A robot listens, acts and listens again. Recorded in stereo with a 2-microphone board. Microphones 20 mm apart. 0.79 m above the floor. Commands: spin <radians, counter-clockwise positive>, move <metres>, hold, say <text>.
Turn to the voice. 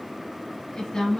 spin 0.61
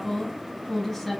say Found it: a woman speaking, straight ahead, 1 to 2 m away.